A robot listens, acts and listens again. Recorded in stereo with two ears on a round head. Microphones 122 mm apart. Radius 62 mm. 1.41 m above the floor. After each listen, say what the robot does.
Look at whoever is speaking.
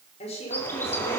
Turn 50° left.
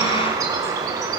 Keep listening.
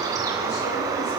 Keep listening.
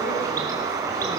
I heard a woman speaking, but can't make it out now. It was about straight ahead or 80° left.